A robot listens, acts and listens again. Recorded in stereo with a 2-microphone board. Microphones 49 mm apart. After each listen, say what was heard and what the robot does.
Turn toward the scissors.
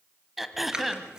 Turn 30° right.
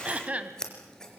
So it is at 15° left. Turn 15° left.
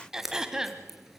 Facing the scissors, 2 to 4 m away.